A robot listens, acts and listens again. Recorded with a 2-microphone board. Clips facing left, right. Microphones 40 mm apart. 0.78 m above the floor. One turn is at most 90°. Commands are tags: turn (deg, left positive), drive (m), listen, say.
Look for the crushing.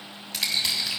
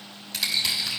<turn deg="30"/>
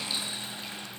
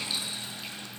<listen/>
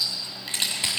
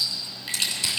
<turn deg="90"/>
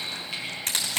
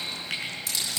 <turn deg="60"/>
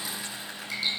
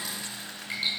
<listen/>
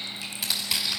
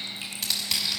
<turn deg="10"/>
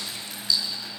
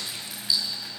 <listen/>
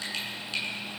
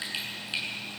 <listen/>
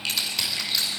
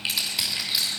<say>Facing the crushing, over 4 m away.</say>